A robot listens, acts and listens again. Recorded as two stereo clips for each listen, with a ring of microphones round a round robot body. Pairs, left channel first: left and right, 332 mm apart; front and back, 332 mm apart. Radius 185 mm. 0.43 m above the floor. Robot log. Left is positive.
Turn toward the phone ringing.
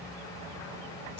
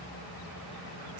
cmd idle
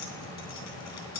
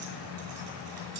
cmd idle
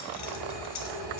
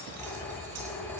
note: The phone ringing: 85° right.
cmd yaw -85
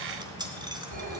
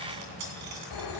note: The phone ringing is now 20° right.
cmd yaw -20
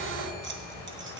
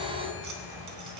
end: Facing the phone ringing, 2 to 4 m away.